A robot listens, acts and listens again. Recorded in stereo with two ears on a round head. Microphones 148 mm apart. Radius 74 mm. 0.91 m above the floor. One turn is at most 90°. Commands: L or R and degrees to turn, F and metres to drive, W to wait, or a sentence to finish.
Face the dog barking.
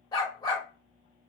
L25
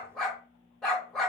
Facing the dog barking.